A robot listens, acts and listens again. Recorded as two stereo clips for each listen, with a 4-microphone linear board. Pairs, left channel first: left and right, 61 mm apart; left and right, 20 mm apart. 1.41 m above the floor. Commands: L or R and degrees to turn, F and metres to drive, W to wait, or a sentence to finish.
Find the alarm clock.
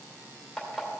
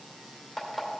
R30
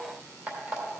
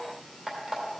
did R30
R140
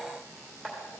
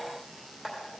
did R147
Facing the alarm clock.